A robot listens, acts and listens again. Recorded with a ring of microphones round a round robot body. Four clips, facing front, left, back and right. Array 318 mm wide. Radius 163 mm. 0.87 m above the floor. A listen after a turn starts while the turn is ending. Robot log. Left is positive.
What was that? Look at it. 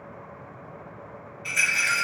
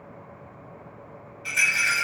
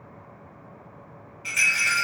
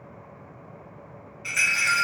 note: The rattle: 115° right.
cmd yaw -115
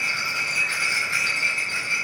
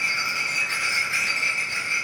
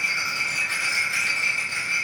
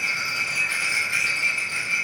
note: The rattle is now 35° right.
cmd yaw -35
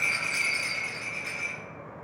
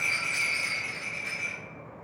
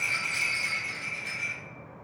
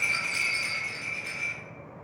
note: The rattle is now 20° right.
cmd yaw -20
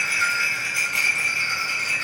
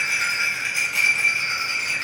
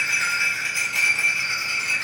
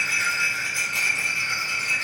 end: Found it: a rattle, straight ahead, 1 to 2 m away.